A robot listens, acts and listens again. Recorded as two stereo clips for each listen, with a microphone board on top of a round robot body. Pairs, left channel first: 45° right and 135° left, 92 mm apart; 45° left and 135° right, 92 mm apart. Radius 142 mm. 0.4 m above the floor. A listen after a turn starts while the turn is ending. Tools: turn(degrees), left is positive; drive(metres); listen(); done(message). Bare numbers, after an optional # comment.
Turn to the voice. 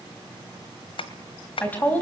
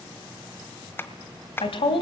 # The woman speaking: 30° left.
turn(30)
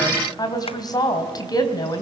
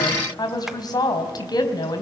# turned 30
done("Facing the woman speaking.")